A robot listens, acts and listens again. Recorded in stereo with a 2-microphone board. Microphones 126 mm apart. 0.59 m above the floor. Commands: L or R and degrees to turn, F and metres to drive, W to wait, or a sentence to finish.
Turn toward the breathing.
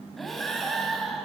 L30
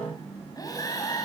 L150
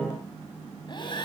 L40
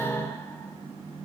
W
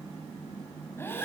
L20
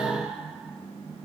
Facing the breathing.